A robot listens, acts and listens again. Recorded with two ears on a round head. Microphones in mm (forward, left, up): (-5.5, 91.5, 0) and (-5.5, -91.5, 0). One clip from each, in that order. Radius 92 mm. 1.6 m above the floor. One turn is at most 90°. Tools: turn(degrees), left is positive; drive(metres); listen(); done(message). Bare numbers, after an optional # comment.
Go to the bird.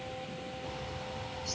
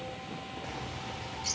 turn(-90)
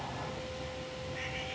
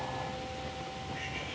drive(1.0)
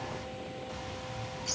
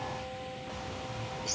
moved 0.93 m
drive(1.0)
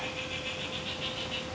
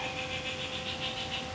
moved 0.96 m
drive(1.0)
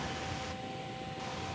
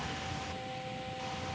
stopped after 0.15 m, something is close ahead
done("Arrived at the bird, straight ahead.")